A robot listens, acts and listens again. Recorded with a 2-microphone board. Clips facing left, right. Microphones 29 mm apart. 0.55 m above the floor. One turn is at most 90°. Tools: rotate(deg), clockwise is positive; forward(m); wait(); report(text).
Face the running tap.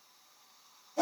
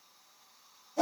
wait()
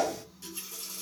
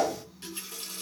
rotate(50)
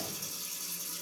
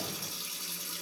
rotate(65)
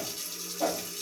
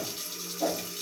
rotate(15)
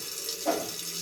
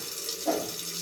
report("Found it: a running tap, straight ahead, 1 to 2 m away.")